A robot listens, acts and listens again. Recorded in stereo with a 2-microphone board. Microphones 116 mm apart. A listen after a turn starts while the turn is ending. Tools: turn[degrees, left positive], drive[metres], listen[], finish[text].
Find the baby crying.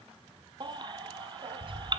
Thought: The baby crying: about 40° right or 140° right.
Action: turn[-40]
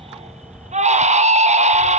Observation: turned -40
Thought: So it is at 95° right.
Action: turn[-95]
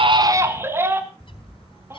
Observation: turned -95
Thought: The baby crying is now 20° right.
Action: turn[-20]
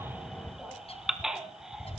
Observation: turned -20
Action: finish[Found it: a baby crying, straight ahead.]